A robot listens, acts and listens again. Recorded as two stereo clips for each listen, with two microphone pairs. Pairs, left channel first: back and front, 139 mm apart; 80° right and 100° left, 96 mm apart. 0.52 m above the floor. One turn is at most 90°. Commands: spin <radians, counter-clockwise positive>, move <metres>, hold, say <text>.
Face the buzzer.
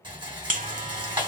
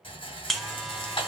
spin 0.17
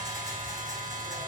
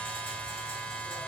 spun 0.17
say Facing the buzzer.